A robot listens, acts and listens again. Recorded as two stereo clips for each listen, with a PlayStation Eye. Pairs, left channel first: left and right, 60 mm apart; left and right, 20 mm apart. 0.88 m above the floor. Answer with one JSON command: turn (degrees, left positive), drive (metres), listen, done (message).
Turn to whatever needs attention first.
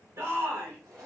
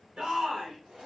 {"turn": -50}
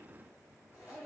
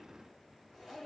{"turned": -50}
{"listen": true}
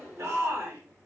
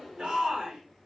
{"turn": -65}
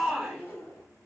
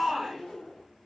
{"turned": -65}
{"turn": -10}
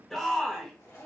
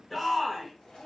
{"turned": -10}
{"done": "Facing the shout."}